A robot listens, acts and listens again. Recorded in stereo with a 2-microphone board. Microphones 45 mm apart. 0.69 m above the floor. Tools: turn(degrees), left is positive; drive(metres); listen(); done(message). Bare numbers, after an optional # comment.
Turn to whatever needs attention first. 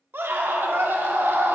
# The scream: about 55° right or 125° right.
turn(-55)
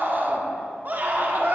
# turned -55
# So it is at 50° right.
turn(-50)
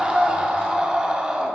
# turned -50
# The scream is now 25° right.
turn(-25)
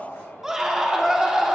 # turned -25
# The scream is now 10° right.
turn(-10)
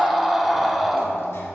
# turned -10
done("Found it: a scream, straight ahead, 1 to 2 m away.")